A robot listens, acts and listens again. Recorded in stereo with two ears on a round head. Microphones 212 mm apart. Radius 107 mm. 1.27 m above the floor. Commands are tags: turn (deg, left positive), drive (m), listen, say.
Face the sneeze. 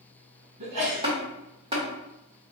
<turn deg="-70"/>
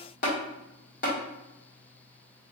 <listen/>
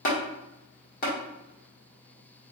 <say>I heard a sneeze, but can't make it out now. It was about straight ahead or 40° right.</say>